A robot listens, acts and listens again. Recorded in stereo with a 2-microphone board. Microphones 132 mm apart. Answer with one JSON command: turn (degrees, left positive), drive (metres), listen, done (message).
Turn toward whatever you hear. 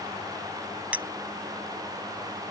{"turn": -30}
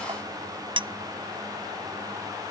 {"turn": -140}
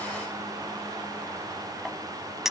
{"done": "Facing the clink."}